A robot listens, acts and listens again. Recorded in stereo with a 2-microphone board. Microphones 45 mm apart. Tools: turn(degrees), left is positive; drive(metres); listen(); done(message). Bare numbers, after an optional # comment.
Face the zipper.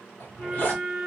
# The zipper: about 35° left or 145° left.
turn(35)
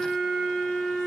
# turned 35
listen()
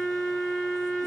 listen()
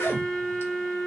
# So it is at 110° left.
turn(110)
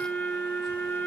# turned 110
listen()
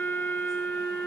listen()
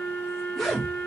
done("Facing the zipper, 1 to 2 m away.")